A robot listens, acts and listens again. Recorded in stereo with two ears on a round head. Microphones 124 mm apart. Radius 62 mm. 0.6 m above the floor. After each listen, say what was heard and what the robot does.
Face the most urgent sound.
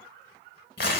Keep listening.
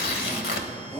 The shout: about 15° left or 165° left. Turn 15° left.
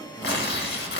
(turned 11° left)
Keep listening.
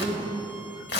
So it is at 155° left. Turn 155° left.
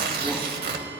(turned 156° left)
Keep listening.
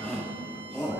Facing the shout, over 4 m away.